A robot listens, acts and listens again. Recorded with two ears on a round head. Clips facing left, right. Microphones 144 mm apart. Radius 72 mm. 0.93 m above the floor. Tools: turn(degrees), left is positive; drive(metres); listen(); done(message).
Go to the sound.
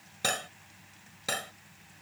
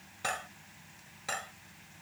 turn(degrees=40)
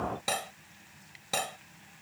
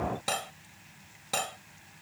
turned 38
drive(metres=1.0)
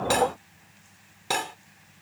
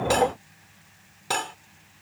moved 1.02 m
drive(metres=1.0)
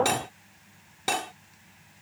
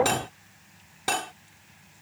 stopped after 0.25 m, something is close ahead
done("I am next to the cutlery clinking.")